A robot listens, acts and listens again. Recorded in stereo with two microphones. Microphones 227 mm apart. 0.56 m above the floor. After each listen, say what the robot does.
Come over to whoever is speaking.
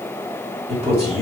Turn 25° right.
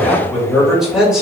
Drive 1.0 m forward.
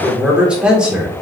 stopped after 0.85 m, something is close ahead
I am next to the man speaking.